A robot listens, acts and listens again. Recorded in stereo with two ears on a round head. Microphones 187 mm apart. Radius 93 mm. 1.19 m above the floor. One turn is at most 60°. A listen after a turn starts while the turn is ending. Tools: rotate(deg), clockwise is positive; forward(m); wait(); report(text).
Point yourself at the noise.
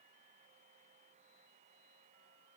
wait()
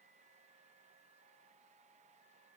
wait()
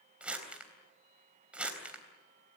rotate(30)
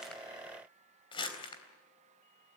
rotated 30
rotate(-25)
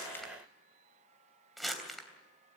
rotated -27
report("Found it: crumpling, straight ahead.")